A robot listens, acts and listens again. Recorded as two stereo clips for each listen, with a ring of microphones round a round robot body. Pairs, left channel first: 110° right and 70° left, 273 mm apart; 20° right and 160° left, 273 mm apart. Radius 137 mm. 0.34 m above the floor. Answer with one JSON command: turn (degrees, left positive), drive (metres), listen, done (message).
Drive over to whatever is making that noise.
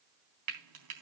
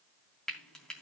{"turn": 65}
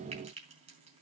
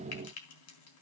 {"drive": 1.0}
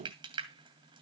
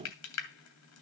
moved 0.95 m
{"drive": 1.0}
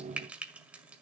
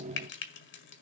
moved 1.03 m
{"turn": -15}
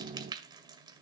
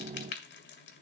{"drive": 1.0}
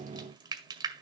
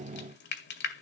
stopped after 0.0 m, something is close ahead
{"done": "Arrived at the frying, straight ahead."}